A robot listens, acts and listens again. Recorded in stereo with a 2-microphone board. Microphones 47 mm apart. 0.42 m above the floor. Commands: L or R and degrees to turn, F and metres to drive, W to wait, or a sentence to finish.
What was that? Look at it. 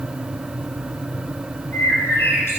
L65
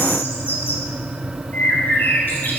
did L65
L50
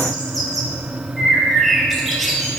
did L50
Facing the bird.